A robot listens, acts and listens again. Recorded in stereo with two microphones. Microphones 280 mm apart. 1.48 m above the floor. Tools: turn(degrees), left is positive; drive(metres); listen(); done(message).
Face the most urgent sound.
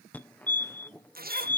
turn(degrees=30)
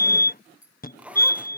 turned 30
turn(degrees=145)
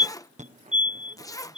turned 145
turn(degrees=-30)
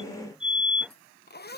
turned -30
done("Found it: a fire alarm, straight ahead.")